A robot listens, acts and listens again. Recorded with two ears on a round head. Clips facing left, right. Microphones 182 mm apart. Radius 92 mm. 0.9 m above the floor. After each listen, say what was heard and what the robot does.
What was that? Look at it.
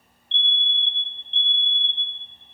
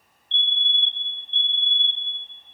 The fire alarm: about 65° right or 115° right. Turn 65° right.
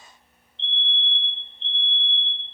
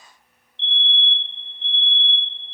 So it is at 15° right. Turn 15° right.
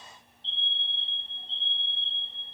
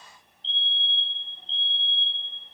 Facing the fire alarm.